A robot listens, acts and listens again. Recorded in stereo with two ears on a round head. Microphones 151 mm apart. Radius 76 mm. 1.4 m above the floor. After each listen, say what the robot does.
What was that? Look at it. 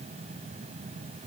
Keep listening.
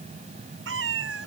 Turn 90° right.
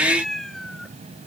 Facing the cat meowing.